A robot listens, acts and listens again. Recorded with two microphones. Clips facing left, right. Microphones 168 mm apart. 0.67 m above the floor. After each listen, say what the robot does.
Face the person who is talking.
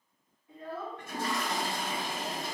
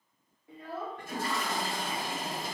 Turn 75° right.
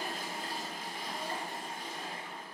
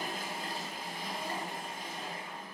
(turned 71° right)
Keep listening.
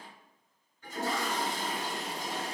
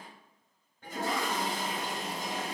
Keep listening.
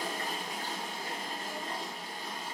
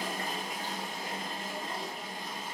I heard a child speaking, but can't make it out now. It was about 5° right or 35° right.